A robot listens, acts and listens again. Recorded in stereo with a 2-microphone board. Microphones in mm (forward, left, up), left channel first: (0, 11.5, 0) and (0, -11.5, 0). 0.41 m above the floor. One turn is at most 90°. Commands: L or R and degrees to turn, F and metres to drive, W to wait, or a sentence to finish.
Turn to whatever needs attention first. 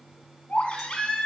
L45
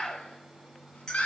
L85
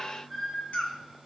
L10
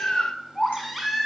Facing the baby crying, 2 to 4 m away.